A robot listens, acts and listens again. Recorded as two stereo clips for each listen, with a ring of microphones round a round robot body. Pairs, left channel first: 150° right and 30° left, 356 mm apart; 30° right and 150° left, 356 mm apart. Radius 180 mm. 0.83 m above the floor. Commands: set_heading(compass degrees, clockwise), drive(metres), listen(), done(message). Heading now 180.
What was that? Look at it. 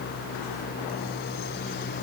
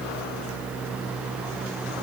listen()
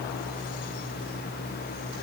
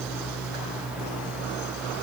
listen()
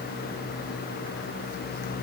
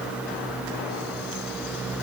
done("I can't make out anything.")